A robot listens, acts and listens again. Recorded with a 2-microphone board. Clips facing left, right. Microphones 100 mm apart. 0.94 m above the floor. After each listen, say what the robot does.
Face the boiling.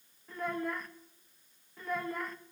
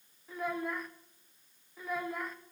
Keep listening.
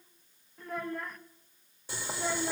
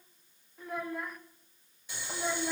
Turn 40° left.
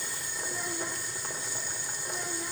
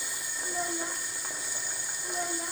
Facing the boiling, 2 to 4 m away.